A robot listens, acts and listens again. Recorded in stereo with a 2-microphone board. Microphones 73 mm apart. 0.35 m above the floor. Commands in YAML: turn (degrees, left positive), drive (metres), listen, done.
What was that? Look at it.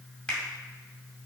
turn: 30
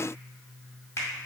turn: 135
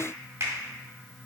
turn: -40
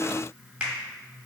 turn: -15
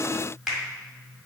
done: "Facing the finger snap, 1 to 2 m away."